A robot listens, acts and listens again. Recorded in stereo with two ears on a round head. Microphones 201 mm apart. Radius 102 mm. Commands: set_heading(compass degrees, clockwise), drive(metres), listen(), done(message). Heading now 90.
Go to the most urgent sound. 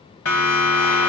set_heading(30)
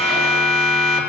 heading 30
drive(1.0)
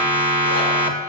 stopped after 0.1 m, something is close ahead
done("Something is in my way. I am facing the siren but have not reached it.")